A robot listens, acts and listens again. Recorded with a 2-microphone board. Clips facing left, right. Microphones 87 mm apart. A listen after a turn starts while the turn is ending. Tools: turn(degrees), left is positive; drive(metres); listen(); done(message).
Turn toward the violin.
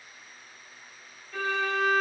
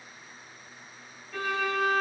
turn(degrees=-30)
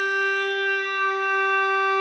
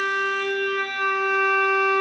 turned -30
turn(degrees=25)
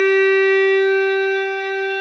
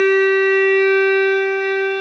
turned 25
done("Found it: a violin, straight ahead, 1 to 2 m away.")